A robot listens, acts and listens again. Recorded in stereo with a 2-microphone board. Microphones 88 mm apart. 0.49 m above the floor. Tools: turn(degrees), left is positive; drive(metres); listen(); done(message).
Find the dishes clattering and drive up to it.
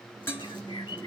turn(degrees=30)
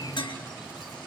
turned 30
turn(degrees=120)
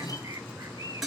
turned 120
drive(metres=1.0)
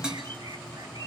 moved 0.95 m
turn(degrees=-10)
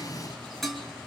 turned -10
drive(metres=1.0)
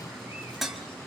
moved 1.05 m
drive(metres=1.0)
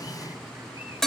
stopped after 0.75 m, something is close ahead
done("I am next to the dishes clattering.")